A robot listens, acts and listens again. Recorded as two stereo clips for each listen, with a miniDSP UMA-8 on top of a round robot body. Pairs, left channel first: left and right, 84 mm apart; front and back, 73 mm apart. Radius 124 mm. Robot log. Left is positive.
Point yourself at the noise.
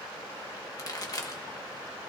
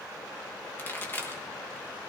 note: The pop: 55° left.
cmd yaw +55
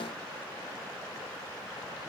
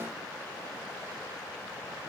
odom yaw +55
end: I heard a pop from this way, but can't make it out now.